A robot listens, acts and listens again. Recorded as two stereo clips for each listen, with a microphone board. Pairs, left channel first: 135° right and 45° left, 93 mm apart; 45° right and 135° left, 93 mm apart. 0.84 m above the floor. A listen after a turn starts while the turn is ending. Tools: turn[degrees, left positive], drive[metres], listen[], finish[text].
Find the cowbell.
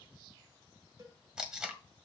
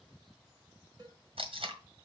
Thought: The cowbell: 90° left.
Action: turn[90]
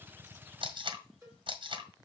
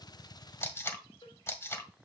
Thought: The cowbell is now 20° right.
Action: turn[-20]
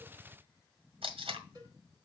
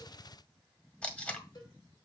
Action: finish[Facing the cowbell, over 4 m away.]